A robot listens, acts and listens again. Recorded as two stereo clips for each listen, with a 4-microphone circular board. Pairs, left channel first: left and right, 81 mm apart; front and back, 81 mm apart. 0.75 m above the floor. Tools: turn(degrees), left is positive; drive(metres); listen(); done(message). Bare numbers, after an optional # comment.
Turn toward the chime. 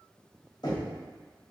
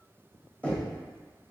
listen()
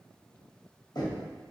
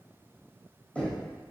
listen()
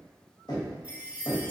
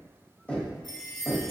# The chime: 20° right.
turn(-20)
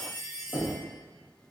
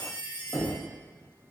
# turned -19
done("Found it: a chime, straight ahead.")